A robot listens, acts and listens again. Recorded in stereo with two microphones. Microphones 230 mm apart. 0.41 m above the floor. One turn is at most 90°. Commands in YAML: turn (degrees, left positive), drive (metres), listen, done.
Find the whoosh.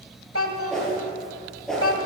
turn: 30
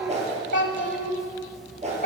turn: -30
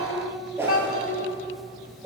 turn: -10
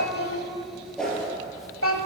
done: "Found it: a whoosh, straight ahead."